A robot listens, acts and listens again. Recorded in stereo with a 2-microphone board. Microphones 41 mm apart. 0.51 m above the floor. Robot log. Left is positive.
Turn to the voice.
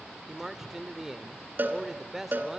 cmd yaw -30
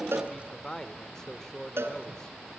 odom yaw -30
note: So it is at 15° left.
cmd yaw +15
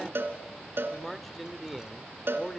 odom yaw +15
end: Facing the man speaking, 1 to 2 m away.